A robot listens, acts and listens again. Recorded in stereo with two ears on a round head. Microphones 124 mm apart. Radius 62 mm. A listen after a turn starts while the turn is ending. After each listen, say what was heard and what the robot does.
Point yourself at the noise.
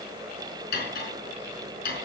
Turn 90° left.
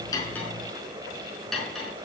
Found it: cutlery clinking, straight ahead.